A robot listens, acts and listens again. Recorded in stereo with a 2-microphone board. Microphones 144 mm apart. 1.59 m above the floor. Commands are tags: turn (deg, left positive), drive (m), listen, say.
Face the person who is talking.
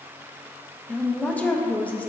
<turn deg="30"/>
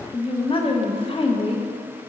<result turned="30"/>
<turn deg="140"/>
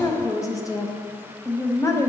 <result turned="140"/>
<turn deg="25"/>
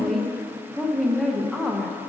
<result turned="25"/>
<say>Facing the woman speaking.</say>